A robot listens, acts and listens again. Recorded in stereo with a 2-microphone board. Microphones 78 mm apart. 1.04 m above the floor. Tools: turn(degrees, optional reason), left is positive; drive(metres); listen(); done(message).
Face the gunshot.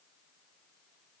listen()
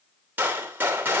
turn(degrees=-25, reason="The gunshot: about 25° right or 155° right.")
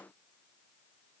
listen()
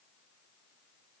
done("I heard a gunshot, but can't make it out now. It was about straight ahead or 130° right.")